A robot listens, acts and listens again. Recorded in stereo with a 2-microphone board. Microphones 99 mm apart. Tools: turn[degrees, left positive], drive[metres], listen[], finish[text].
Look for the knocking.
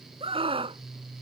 Action: listen[]
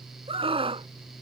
Action: listen[]
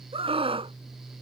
Action: finish[I can't make out knocking, only a scream.]